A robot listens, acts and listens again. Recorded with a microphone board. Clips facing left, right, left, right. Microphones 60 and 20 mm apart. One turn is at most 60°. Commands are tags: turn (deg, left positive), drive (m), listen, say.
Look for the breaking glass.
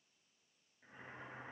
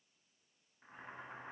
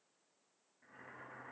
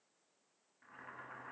<listen/>
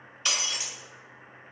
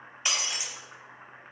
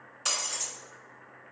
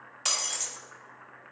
<turn deg="-20"/>
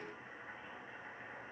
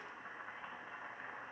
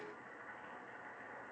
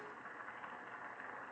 <listen/>
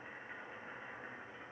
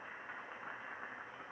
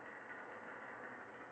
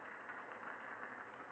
<say>I heard breaking glass, but can't make it out now. It was about straight ahead or 140° right.</say>